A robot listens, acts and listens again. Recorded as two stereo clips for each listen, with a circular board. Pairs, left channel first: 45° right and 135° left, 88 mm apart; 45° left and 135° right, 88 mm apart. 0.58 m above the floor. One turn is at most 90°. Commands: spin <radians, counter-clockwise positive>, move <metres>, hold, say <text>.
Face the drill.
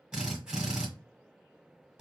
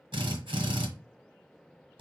spin -1.57
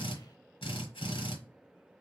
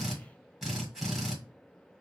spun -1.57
spin -0.87
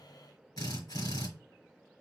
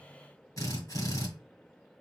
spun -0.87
say Facing the drill, 1 to 2 m away.